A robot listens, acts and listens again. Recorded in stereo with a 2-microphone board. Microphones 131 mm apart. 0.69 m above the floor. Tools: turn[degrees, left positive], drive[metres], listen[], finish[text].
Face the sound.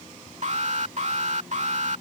Thought: The alarm: about 60° right or 120° right.
Action: turn[-60]
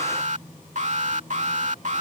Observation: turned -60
Thought: So it is at 65° right.
Action: turn[-65]
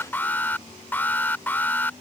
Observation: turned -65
Thought: The alarm is now 15° left.
Action: turn[15]
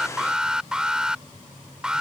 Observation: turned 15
Action: finish[Facing the alarm.]